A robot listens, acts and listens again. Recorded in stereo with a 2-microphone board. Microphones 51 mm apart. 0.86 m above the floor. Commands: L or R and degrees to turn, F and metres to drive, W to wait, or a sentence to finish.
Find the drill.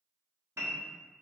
W
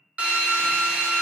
R25
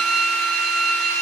Facing the drill, under 1 m away.